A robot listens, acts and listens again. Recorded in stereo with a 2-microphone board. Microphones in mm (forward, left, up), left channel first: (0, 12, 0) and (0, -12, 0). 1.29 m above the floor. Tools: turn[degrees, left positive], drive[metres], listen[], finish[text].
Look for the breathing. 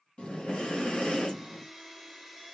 Thought: The breathing: about 50° left or 130° left.
Action: turn[50]
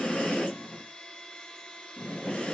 Thought: So it is at 80° left.
Action: turn[80]
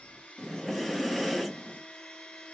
Action: finish[Found it: breathing, straight ahead, 1 to 2 m away.]